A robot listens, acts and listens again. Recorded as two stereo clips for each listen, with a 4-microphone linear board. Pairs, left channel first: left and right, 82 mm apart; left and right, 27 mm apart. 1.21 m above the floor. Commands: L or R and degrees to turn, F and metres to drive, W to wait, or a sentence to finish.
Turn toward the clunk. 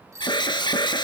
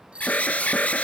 W
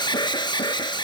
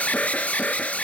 W
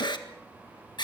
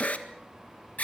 I can't make out a clunk to turn to.